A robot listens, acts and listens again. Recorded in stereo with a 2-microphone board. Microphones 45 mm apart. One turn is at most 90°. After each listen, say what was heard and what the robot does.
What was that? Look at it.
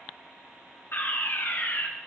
The fire alarm: about 50° left or 130° left. Turn 50° left.
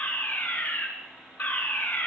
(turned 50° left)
So it is at 60° left. Turn 60° left.
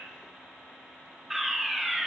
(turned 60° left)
Facing the fire alarm, 2 to 4 m away.